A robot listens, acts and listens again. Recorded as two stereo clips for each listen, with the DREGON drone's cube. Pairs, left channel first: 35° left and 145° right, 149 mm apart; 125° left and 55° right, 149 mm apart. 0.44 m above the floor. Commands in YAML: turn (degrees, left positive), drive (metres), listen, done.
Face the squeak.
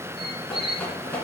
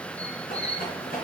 turn: 165
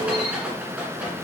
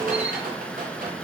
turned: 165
listen: true
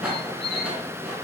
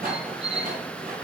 turn: -15
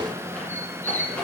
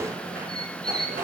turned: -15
done: "Found it: a squeak, straight ahead."